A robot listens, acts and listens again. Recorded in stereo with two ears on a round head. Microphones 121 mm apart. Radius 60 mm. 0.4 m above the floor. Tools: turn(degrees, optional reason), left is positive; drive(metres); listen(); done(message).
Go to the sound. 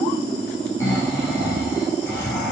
turn(degrees=20, reason="The snoring: about 20° left or 160° left.")
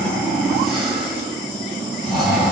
drive(metres=1.0)
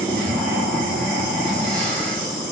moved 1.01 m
turn(degrees=10, reason="The snoring is now 10° left.")
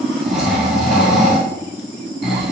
drive(metres=1.0)
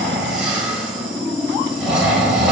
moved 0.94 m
drive(metres=1.0)
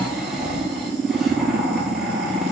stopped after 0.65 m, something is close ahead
done("Arrived at the snoring, straight ahead.")